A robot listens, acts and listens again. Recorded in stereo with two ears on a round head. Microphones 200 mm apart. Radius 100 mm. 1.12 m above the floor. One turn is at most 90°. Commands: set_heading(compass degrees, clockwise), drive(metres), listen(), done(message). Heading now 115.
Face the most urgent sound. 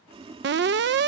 set_heading(165)
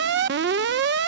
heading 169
set_heading(229)
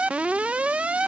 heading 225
done("Found it: an alarm, straight ahead.")